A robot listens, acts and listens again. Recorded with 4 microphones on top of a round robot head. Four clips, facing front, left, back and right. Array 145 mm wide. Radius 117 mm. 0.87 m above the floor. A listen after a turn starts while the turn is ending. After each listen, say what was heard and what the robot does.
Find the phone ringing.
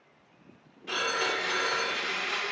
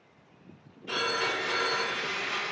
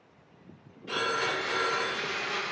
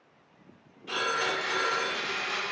The phone ringing: 40° left. Turn 40° left.
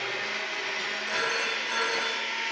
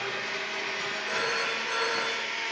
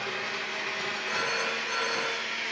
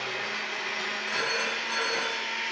Facing the phone ringing, 1 to 2 m away.